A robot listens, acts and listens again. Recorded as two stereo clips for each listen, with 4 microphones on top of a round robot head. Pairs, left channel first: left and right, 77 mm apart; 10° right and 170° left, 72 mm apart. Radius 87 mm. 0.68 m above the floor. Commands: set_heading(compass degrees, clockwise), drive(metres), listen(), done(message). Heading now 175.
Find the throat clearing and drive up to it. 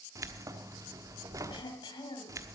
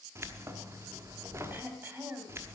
set_heading(65)
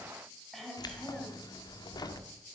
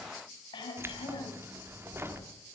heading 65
drive(1.0)
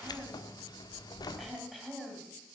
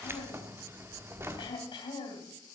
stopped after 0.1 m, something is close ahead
done("Something is in my way. I am facing the throat clearing but have not reached it.")